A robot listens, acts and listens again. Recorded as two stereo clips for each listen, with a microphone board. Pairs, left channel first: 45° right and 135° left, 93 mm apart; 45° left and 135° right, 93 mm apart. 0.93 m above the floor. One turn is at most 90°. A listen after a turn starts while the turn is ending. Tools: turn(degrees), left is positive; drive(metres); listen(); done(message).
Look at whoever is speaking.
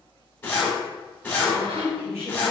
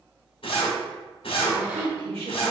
turn(degrees=-90)
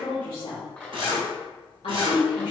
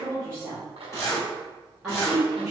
turn(degrees=-45)
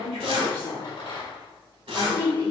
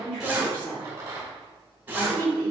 done("Facing the woman speaking, 2 to 4 m away.")